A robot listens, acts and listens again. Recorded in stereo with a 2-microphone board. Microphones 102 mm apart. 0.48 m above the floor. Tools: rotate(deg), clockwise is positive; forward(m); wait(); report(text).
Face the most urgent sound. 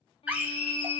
rotate(15)
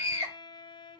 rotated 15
rotate(150)
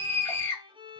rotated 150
rotate(-30)
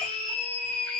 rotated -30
rotate(-10)
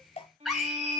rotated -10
report("Facing the scream, 2 to 4 m away.")